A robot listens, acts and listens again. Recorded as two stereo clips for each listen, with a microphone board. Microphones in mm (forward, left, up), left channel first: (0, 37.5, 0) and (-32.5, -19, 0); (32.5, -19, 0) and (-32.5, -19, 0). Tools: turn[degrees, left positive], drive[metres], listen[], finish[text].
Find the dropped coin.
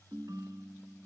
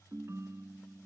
Action: listen[]
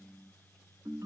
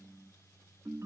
Action: listen[]
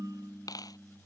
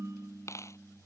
Thought: The dropped coin: 40° left.
Action: turn[40]
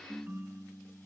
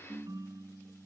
Action: finish[I heard a dropped coin from this way, but can't make it out now.]